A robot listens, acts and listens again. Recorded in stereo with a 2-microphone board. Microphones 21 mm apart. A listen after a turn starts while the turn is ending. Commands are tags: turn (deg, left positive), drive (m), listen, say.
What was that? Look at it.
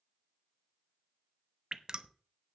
<turn deg="-30"/>
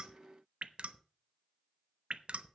<turn deg="-120"/>
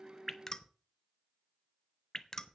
<turn deg="25"/>
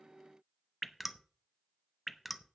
<turn deg="-10"/>
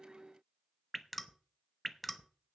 <say>Found it: dripping, straight ahead, under 1 m away.</say>